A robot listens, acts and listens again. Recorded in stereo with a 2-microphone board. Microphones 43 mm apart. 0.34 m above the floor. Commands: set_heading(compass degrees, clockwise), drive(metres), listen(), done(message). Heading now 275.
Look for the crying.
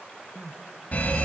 set_heading(245)
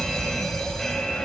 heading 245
listen()
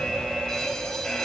listen()
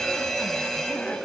done("I heard crying, but can't make it out now. It was about 30° right or 150° left.")